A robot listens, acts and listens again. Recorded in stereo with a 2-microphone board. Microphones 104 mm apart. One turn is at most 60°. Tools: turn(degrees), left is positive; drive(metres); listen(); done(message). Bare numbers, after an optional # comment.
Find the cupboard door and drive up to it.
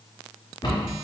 # The cupboard door: about 50° left or 130° left.
turn(50)
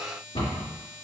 # So it is at 75° left.
turn(60)
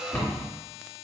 # The cupboard door is now 20° left.
turn(20)
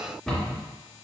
drive(1.0)
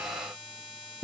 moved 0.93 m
# The cupboard door is now 10° left.
turn(10)
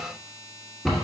drive(1.0)
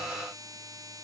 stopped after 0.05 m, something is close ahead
listen()
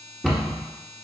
done("Arrived at the cupboard door, straight ahead.")